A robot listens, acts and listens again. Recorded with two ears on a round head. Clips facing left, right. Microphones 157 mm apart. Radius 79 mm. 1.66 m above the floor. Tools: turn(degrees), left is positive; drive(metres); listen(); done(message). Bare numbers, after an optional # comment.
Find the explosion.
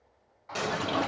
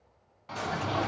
turn(90)
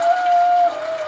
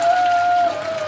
done("I heard an explosion from this way, but can't make it out now.")